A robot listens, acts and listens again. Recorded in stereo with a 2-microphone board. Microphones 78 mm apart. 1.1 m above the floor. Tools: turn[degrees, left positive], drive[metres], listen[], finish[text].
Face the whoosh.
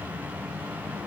Action: listen[]
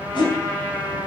Action: turn[90]
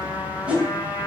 Thought: So it is at 15° right.
Action: turn[-15]
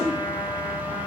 Action: listen[]
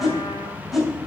Action: finish[Facing the whoosh.]